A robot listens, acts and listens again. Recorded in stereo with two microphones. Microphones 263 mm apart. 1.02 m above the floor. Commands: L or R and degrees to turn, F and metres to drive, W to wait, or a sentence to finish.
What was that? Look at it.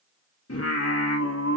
L70
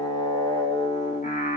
L35
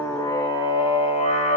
L30
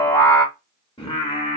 L25
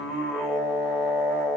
Found it: singing, straight ahead.